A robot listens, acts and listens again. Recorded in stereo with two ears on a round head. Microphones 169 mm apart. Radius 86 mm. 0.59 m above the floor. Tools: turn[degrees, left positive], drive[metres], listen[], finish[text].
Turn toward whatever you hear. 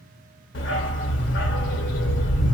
Thought: The dog barking: about 65° left or 115° left.
Action: turn[65]
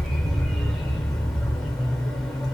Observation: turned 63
Action: finish[Found it: a dog barking, straight ahead.]